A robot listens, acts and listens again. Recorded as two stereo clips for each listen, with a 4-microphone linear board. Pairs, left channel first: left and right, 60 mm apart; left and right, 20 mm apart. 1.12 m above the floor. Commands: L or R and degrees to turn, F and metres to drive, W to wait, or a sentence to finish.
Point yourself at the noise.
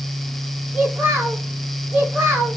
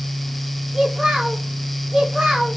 R30
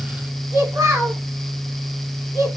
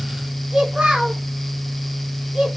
R120
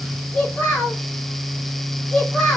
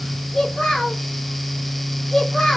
L20
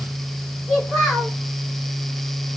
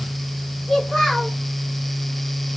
L10
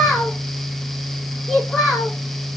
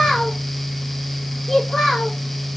Found it: a child speaking, straight ahead, 2 to 4 m away.